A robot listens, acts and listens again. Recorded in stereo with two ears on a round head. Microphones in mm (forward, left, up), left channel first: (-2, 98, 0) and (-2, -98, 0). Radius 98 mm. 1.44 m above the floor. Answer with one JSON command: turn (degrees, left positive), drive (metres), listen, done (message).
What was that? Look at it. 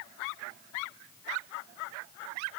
{"listen": true}
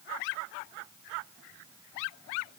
{"listen": true}
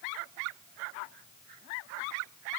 {"done": "I can't make out anything."}